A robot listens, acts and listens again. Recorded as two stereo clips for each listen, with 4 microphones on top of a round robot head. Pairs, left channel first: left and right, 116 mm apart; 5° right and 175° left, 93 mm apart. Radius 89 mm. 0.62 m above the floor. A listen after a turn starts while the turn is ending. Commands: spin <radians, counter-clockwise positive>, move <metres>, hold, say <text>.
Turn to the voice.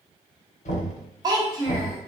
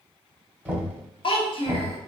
spin -0.52
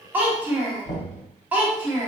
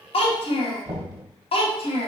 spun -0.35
spin -0.17
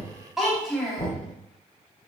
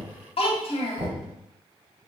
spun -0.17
say Found it: a child speaking, straight ahead, under 1 m away.